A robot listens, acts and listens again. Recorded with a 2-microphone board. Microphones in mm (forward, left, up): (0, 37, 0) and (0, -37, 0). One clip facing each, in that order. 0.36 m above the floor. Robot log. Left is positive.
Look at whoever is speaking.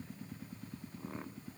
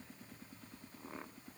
cmd idle
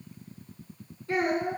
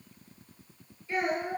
note: The child speaking: about 65° left or 115° left.
cmd yaw +65
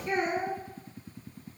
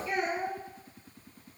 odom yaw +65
note: So it is at 45° left.
cmd yaw +45
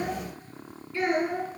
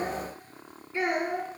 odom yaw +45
note: The child speaking is now 20° right.
cmd yaw -20
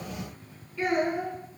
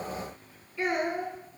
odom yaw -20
end: Found it: a child speaking, straight ahead.